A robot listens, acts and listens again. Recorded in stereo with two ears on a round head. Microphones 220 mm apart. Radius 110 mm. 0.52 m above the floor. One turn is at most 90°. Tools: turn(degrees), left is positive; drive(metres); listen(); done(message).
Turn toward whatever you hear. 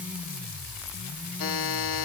turn(degrees=60)
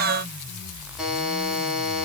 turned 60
done("Found it: a buzzer, straight ahead.")